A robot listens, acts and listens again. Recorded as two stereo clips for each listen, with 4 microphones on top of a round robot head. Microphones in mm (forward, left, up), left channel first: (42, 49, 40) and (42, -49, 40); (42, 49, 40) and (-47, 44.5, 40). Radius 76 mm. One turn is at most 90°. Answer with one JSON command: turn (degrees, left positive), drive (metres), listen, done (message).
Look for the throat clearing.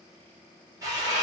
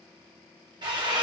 {"listen": true}
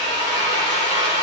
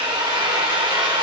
{"listen": true}
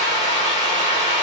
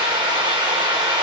{"done": "I can't make out throat clearing, only a drill."}